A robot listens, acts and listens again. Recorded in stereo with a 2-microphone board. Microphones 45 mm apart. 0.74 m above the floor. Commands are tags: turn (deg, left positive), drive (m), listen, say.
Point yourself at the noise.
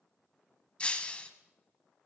<turn deg="25"/>
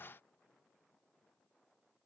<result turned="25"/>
<listen/>
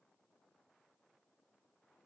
<say>I heard breaking glass, but can't make it out now. It was about straight ahead or 130° left.</say>